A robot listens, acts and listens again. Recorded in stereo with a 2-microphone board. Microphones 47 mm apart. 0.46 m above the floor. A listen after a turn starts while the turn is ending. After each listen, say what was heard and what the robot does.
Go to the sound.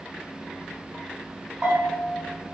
The bell: about 35° right or 145° right. Turn 35° right.
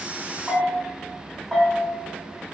Drive 1.0 m forward.
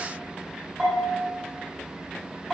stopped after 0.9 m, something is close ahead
The bell is now 15° right. Turn 15° right.
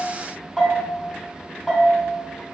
I am next to the bell.